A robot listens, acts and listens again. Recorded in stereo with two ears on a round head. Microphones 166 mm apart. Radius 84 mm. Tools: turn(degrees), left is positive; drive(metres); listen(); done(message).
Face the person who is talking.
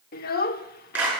turn(degrees=50)
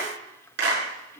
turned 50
listen()
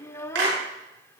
turn(degrees=15)
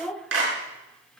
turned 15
done("Facing the child speaking, under 1 m away.")